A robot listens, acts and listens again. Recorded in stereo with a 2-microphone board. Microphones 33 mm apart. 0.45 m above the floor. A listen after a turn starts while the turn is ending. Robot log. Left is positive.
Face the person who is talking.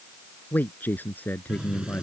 note: The man speaking: about 65° left or 115° left.
cmd yaw +65
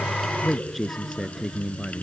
end: Facing the man speaking.